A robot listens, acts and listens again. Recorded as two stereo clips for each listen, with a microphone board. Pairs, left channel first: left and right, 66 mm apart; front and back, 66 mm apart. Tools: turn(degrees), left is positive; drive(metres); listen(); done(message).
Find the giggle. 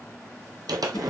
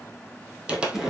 listen()
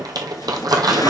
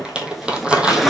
listen()
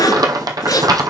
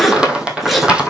done("I can't make out a giggle, only crumpling and a zipper.")